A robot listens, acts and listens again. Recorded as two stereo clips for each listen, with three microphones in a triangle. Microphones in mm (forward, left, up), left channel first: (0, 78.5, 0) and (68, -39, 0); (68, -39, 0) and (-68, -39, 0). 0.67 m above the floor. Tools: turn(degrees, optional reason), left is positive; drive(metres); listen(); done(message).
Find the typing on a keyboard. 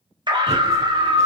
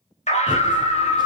turn(degrees=-125, reason="The typing on a keyboard: 125° right.")
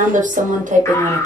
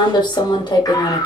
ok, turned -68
turn(degrees=-55, reason="The typing on a keyboard is now 55° right.")
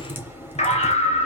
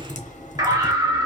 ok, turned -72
turn(degrees=15, reason="The typing on a keyboard is now 15° left.")
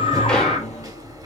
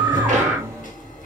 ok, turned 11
done("Found it: typing on a keyboard, straight ahead.")